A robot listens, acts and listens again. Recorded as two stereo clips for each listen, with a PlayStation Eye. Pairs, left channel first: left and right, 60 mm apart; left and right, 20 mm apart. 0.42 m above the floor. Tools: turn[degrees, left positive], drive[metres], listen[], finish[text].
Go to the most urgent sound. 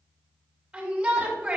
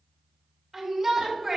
Action: turn[-30]
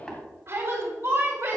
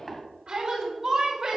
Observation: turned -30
Thought: So it is at 135° right.
Action: turn[-135]
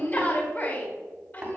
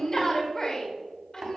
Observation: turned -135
Thought: The shout is now 30° left.
Action: turn[30]
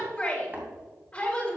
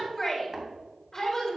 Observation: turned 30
Thought: The shout is now 15° left.
Action: turn[15]
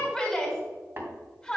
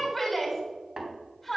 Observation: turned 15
Action: drive[1.0]
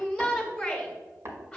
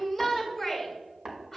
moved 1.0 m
Thought: The shout is now 10° left.
Action: turn[10]
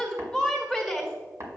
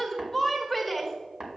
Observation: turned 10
Action: drive[1.0]
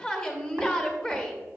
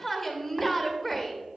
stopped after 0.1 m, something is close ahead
Thought: The shout is now 10° left.
Action: turn[10]
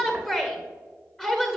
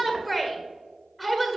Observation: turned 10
Action: finish[I am next to the shout.]